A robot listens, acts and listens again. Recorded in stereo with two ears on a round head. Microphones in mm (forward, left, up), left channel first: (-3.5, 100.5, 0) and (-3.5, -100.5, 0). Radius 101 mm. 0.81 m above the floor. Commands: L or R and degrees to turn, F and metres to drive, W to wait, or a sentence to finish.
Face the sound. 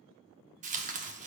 R35
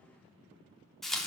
Facing the tearing paper, under 1 m away.